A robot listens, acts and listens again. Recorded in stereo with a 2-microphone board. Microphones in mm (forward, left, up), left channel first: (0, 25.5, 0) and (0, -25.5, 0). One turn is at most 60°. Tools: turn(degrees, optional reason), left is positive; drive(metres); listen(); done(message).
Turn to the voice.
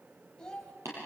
turn(degrees=30)
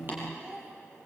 turn(degrees=-15, reason="So it is at 15° right.")
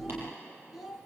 done("Facing the child speaking, 2 to 4 m away.")